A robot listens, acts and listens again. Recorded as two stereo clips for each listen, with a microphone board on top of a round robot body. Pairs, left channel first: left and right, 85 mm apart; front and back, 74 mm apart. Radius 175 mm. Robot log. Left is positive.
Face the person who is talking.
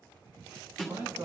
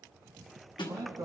note: The man speaking: 150° right.
cmd yaw -150
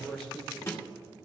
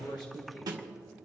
note: The man speaking is now 10° left.
cmd yaw +10
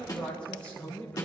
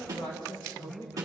note: The man speaking is now 20° left.
cmd yaw +20
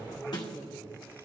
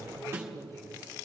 note: The man speaking is now 10° left.
cmd yaw +10
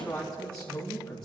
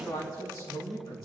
note: The man speaking is now 15° left.
cmd yaw +15
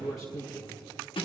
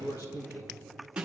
end: Found it: a man speaking, straight ahead.